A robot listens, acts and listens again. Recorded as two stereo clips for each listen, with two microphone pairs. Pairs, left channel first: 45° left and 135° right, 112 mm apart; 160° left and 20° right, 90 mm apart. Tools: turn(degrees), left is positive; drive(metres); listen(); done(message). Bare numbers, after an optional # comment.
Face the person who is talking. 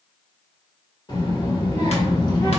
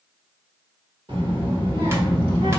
done("Found it: a child speaking, straight ahead, 1 to 2 m away.")